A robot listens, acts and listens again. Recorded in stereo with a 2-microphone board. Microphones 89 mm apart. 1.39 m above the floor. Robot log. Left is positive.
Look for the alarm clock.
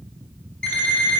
cmd yaw +30
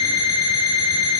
note: So it is at 135° left.
cmd yaw +135
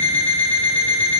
note: The alarm clock is now 15° left.
cmd yaw +15
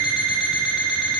end: Facing the alarm clock, 1 to 2 m away.